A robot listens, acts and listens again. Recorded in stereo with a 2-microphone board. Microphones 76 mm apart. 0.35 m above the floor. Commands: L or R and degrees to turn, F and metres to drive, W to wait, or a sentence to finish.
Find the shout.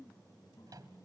W
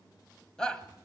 L30
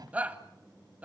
R20
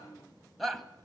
Facing the shout, 1 to 2 m away.